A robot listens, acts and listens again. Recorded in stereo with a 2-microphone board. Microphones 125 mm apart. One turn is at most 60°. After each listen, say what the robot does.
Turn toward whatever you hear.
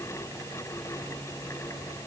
Keep listening.
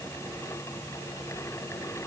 Keep listening.
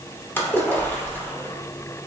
Turn 15° left.
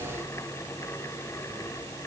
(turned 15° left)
Keep listening.
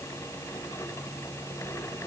I heard a splash, but can't make it out now. It was about straight ahead or 150° left.